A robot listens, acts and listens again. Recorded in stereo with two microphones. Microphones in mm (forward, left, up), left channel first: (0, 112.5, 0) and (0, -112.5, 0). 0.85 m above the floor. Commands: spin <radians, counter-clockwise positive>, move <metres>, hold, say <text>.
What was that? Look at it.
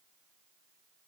hold
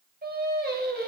spin -0.79
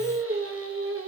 spin -1.48
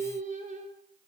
spin -0.61
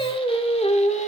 spin 0.52
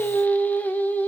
spin 0.17
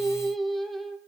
say Facing the singing.